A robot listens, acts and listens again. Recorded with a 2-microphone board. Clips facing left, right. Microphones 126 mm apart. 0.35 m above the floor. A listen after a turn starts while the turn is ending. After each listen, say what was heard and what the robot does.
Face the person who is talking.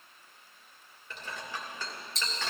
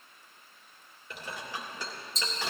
Keep listening.
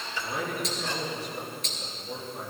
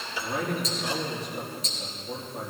Turn 30° left.
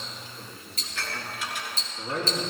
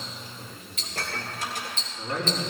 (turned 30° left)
So it is at 150° left. Turn 150° left.
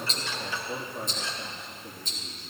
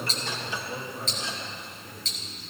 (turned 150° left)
The man speaking is now 25° left. Turn 25° left.
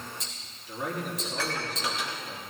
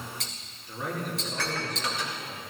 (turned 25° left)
Found it: a man speaking, straight ahead.